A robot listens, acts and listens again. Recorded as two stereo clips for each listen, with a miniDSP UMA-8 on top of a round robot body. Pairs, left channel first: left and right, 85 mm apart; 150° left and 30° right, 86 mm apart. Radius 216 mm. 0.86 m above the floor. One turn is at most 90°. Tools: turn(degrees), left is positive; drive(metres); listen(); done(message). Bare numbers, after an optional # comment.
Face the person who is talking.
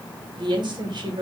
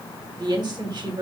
# The woman speaking: 60° right.
turn(-60)
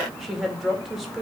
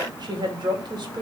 done("Facing the woman speaking, 2 to 4 m away.")